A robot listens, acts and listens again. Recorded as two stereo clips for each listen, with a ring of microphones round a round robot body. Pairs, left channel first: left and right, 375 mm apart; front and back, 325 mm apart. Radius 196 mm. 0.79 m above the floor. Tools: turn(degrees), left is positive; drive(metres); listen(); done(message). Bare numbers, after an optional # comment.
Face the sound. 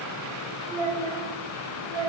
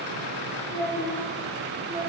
# The child speaking: 100° right.
turn(-100)
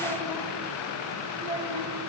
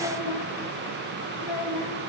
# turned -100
# The child speaking is now 15° right.
turn(-15)
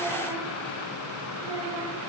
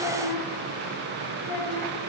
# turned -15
listen()
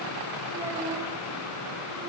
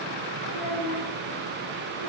listen()
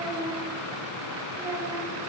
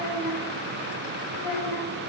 # The child speaking is now 10° right.
turn(-10)
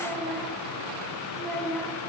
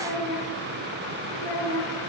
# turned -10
done("Facing the child speaking.")